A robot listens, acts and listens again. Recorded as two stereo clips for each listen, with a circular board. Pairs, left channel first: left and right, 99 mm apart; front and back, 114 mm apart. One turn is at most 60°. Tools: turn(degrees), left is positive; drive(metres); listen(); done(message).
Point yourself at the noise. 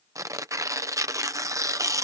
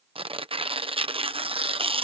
turn(degrees=-60)
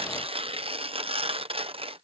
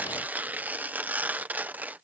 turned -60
turn(degrees=-60)
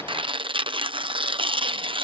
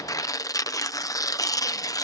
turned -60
turn(degrees=-60)
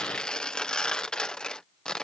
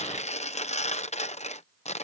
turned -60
turn(degrees=10)
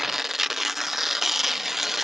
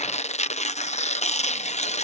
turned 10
done("Facing the tearing paper.")